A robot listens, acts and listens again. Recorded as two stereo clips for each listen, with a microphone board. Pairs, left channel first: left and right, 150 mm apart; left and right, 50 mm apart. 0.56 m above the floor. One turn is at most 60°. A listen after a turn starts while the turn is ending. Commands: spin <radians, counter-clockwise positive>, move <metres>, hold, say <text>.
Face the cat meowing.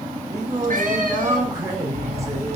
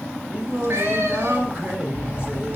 spin -1.05
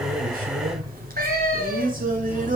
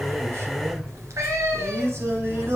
spin -1.05
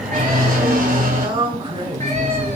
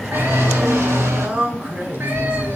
spin -0.44
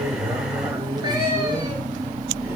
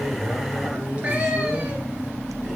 spin -0.52
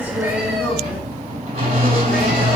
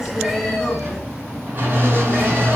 hold
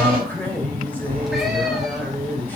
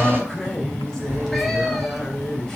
hold
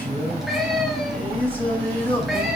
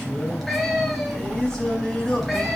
say Facing the cat meowing.